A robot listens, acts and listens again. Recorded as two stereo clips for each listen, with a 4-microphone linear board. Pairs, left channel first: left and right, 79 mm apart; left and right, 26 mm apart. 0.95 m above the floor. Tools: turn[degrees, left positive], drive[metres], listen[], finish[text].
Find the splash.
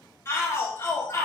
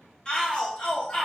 Action: listen[]
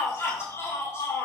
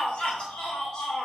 Action: listen[]
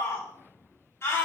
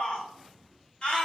Action: finish[I can't make out a splash to turn to.]